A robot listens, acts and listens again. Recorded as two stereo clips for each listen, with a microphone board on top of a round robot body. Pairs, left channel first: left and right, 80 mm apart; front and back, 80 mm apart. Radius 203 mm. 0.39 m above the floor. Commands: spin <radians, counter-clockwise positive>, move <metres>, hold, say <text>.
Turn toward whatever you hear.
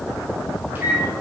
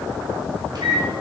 spin -2.71
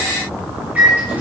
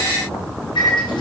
spin -0.35
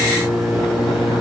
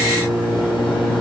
say Facing the microwave, 2 to 4 m away.